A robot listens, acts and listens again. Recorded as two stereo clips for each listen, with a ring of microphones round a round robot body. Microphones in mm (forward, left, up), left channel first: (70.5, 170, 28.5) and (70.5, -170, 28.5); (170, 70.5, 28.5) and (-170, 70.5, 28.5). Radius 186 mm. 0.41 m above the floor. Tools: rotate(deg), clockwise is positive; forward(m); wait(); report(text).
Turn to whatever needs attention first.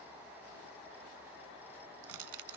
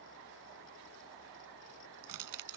wait()
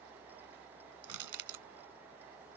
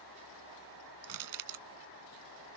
wait()
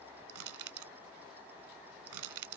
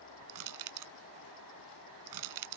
report("I can't make out anything urgent to turn to.")